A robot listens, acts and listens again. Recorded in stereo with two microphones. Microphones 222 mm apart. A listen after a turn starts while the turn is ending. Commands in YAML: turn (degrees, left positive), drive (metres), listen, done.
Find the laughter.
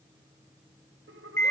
turn: -70
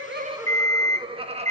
turn: -30
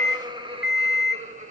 turn: -35
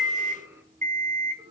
turn: -20
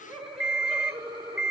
done: "Facing the laughter."